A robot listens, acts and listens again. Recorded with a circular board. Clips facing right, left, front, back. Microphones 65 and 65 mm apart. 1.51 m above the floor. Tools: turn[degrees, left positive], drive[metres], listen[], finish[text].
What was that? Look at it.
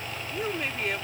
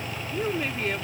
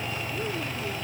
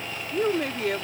Thought: The woman speaking: straight behind.
Action: turn[180]
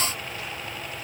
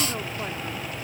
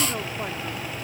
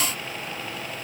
Action: listen[]
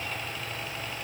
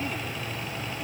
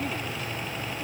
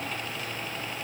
Action: listen[]
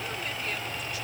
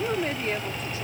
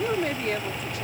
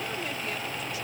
Thought: The woman speaking is now 35° left.
Action: turn[35]
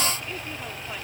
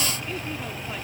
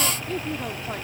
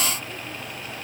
Action: listen[]
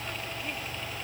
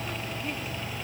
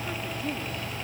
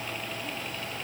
Action: listen[]
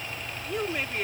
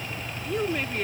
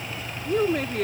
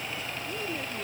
Action: finish[Facing the woman speaking.]